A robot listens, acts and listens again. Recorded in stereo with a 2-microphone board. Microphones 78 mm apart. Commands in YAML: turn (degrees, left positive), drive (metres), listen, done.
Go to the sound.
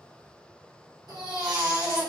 turn: -70
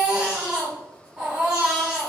turn: -15
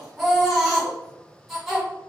drive: 1.0
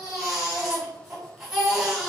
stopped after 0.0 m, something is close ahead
turn: -10
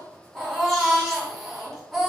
done: "Something is in my way. I am facing the baby crying but have not reached it."